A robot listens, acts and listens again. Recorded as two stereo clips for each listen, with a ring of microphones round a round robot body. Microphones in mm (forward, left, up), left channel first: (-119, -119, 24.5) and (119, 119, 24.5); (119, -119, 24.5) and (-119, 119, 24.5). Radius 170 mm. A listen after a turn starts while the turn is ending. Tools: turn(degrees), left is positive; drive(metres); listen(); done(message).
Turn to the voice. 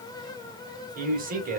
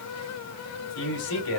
turn(degrees=-20)
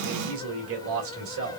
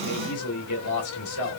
done("Found it: a man speaking, straight ahead, 1 to 2 m away.")